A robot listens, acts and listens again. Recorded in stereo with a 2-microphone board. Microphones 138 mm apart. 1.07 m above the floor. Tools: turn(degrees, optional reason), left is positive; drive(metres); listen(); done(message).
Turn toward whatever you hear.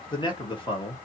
turn(degrees=35, reason="The man speaking: about 35° left or 145° left.")
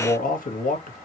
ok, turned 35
turn(degrees=110, reason="So it is at 110° left.")
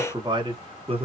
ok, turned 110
turn(degrees=-40, reason="The man speaking is now 40° right.")
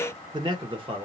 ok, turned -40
turn(degrees=-40, reason="The man speaking is now 40° right.")
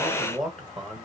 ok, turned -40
done("Found it: a man speaking, straight ahead, 1 to 2 m away.")